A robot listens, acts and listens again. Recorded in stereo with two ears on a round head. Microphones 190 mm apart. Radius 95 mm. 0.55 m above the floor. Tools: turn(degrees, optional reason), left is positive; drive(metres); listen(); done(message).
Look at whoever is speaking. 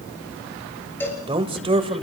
turn(degrees=-25, reason="The man speaking: about 25° right or 155° right.")
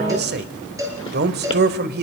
turn(degrees=-125, reason="So it is at 125° right.")
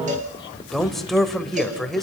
done("Found it: a man speaking, straight ahead, 1 to 2 m away.")